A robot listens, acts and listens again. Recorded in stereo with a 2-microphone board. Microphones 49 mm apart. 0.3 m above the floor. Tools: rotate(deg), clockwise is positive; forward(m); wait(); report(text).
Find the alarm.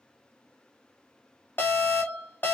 rotate(-40)
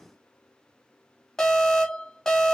rotate(-10)
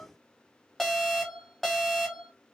report("Facing the alarm, 1 to 2 m away.")